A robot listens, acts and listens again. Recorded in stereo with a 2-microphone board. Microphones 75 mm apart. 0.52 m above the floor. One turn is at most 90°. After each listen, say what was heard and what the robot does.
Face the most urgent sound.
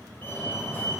The fire alarm: about 25° left or 155° left. Turn 25° left.
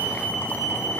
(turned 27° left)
Found it: a fire alarm, straight ahead.